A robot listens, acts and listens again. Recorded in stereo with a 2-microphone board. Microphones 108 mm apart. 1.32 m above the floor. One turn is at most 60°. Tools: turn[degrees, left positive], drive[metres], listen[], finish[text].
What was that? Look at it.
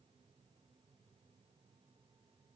Action: listen[]
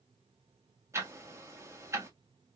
Thought: The ticking: about 25° right or 155° right.
Action: turn[-25]
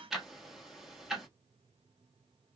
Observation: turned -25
Action: finish[Found it: ticking, straight ahead, 1 to 2 m away.]